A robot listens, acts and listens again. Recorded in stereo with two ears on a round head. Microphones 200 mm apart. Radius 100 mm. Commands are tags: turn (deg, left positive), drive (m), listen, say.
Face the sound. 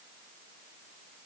<listen/>
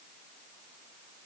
<listen/>
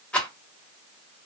<turn deg="30"/>
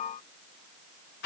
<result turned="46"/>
<turn deg="130"/>
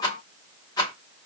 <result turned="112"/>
<turn deg="20"/>
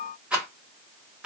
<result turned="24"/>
<say>Found it: a rattle, straight ahead, under 1 m away.</say>